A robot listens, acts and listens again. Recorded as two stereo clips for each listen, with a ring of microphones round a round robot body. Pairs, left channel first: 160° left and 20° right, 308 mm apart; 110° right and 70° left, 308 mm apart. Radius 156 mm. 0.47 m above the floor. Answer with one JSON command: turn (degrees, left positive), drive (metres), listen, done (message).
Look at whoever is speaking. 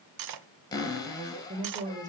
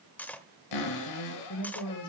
{"turn": -85}
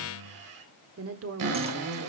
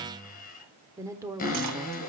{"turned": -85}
{"turn": -10}
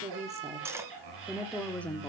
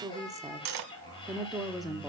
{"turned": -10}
{"turn": 165}
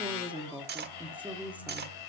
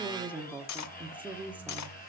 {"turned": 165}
{"turn": 25}
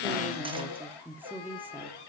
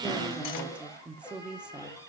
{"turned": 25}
{"turn": 10}
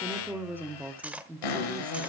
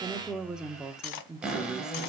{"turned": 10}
{"done": "Found it: a woman speaking, straight ahead."}